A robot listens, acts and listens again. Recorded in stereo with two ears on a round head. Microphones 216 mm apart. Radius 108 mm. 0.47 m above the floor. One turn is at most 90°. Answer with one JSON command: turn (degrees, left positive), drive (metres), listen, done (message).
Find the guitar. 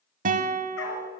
{"turn": -35}
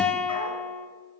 {"done": "Facing the guitar, under 1 m away."}